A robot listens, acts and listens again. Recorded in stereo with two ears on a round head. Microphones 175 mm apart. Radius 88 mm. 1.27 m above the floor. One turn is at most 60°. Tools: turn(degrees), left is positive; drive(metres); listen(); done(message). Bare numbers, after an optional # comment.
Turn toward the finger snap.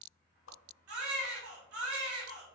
listen()
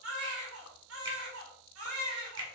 # The finger snap: about 25° right or 155° right.
turn(-25)
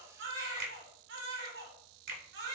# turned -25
# So it is at 130° right.
turn(-60)
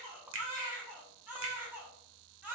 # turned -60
# The finger snap is now 70° right.
turn(-60)
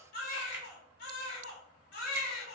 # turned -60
# Nothing new. It was at 10° right.
turn(-10)
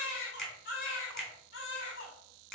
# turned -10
done("Facing the finger snap, 2 to 4 m away.")